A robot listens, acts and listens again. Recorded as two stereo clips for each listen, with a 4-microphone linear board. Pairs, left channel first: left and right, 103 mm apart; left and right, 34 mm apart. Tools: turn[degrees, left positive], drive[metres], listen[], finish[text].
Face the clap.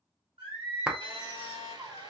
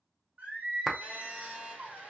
Action: turn[-30]
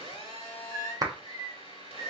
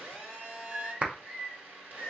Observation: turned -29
Thought: So it is at 145° right.
Action: turn[-145]
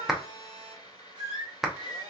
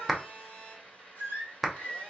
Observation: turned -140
Action: finish[Found it: a clap, straight ahead, under 1 m away.]